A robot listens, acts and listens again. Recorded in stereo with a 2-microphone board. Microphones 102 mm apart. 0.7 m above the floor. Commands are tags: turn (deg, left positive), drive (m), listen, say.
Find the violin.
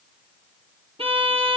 <turn deg="-65"/>
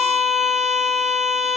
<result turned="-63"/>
<say>Found it: a violin, straight ahead.</say>